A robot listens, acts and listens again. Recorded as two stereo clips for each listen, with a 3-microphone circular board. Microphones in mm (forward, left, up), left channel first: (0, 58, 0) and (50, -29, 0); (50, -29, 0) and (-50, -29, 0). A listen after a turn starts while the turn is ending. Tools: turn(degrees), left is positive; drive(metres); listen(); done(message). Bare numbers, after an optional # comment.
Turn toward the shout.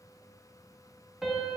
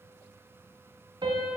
listen()
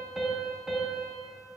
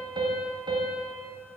listen()
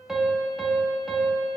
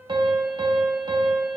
done("I can't make out a shout to turn to.")